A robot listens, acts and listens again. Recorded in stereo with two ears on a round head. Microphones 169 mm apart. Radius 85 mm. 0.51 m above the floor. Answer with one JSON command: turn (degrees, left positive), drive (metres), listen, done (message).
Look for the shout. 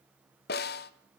{"listen": true}
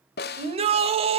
{"turn": -35}
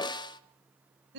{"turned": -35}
{"turn": -110}
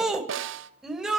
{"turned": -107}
{"done": "Facing the shout."}